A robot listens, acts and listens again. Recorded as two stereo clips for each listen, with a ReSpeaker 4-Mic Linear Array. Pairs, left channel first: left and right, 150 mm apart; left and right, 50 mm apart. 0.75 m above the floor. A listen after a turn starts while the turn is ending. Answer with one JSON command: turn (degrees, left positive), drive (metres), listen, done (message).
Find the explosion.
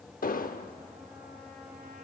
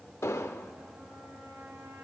{"turn": 70}
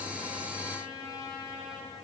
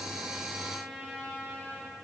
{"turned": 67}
{"listen": true}
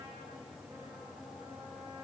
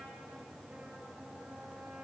{"done": "I heard an explosion, but can't make it out now. It was about straight ahead or 45° left."}